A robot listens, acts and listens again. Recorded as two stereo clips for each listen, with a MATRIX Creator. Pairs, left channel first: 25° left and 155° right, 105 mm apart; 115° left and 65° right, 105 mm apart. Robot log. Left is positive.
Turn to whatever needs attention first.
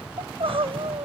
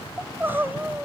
note: The crying: 135° right.
cmd yaw -135
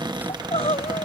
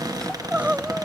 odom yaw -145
note: The crying is now 10° left.
cmd yaw +10
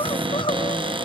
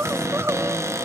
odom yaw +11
end: Found it: crying, straight ahead.